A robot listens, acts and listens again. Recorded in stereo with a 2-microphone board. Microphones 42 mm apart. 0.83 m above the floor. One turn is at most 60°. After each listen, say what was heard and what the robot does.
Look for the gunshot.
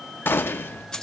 The gunshot: about 65° left or 115° left. Turn 60° left.
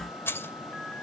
Keep listening.
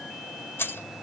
I heard a gunshot, but can't make it out now. It was about 5° left or 55° left.